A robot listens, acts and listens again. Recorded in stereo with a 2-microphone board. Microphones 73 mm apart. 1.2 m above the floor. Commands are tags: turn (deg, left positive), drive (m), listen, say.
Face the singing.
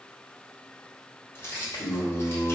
<turn deg="70"/>
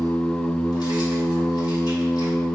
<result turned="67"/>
<turn deg="65"/>
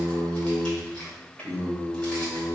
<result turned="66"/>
<turn deg="15"/>
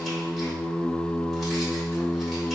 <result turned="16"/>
<say>Facing the singing, 2 to 4 m away.</say>